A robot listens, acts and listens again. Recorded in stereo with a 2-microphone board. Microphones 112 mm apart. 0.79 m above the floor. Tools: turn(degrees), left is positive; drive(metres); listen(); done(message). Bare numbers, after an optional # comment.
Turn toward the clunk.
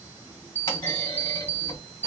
# The clunk: about 40° left or 140° left.
turn(40)
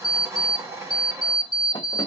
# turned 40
listen()
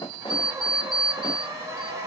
done("I heard a clunk, but can't make it out now. It was about straight ahead or 100° left.")